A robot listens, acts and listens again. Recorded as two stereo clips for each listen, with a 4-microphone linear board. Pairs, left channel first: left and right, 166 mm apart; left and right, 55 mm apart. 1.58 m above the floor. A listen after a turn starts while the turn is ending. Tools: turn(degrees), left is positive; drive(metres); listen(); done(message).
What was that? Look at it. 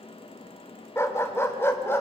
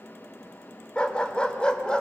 turn(degrees=30)
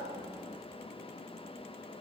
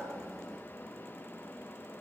listen()
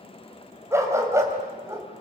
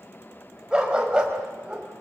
turn(degrees=-20)
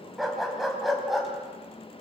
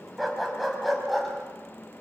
done("Facing the dog barking.")